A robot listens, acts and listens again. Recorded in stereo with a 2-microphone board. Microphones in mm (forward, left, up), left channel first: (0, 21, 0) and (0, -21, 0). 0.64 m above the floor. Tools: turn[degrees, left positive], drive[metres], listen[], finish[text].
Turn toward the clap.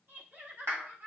Action: turn[-90]
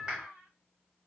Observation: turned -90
Thought: So it is at 15° right.
Action: turn[-15]
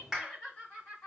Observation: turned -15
Action: finish[Facing the clap.]